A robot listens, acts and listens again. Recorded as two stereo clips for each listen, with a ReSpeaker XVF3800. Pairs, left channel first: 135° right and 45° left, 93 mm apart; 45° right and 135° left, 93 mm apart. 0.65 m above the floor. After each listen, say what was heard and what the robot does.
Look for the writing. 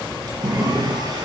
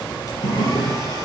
The writing: 30° right. Turn 30° right.
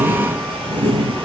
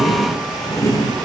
The writing is now 10° left. Turn 10° left.
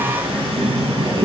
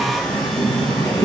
Found it: writing, straight ahead.